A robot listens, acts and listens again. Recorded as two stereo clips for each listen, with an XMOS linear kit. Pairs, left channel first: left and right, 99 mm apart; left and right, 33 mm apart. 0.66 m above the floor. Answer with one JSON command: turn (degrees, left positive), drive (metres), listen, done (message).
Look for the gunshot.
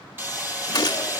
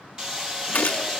{"turn": 40}
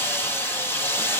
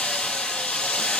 {"listen": true}
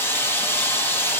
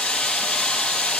{"done": "I heard a gunshot, but can't make it out now. It was about straight ahead or 100° left."}